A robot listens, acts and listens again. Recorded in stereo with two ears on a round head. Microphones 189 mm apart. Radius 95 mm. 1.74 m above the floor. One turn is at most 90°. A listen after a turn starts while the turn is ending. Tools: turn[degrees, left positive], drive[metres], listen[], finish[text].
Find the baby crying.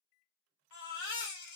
Thought: The baby crying: about 65° left or 115° left.
Action: turn[65]
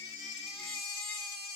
Thought: So it is at 30° left.
Action: turn[30]
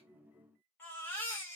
Thought: The baby crying is now 10° left.
Action: turn[10]
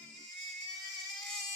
Action: finish[Found it: a baby crying, straight ahead.]